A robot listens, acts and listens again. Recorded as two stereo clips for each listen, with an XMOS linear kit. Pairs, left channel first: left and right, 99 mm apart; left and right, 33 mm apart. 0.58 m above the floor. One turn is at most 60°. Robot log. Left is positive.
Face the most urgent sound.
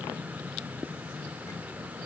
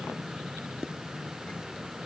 cmd idle
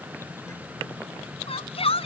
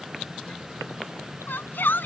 note: The shout: about 75° left or 105° left.
cmd yaw +60
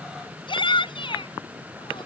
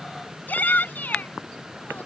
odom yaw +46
note: So it is at 60° left.
cmd yaw +60
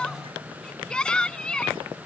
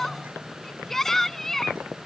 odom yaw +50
note: The shout is now 10° left.
cmd yaw +10
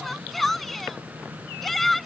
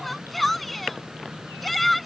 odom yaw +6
end: Facing the shout.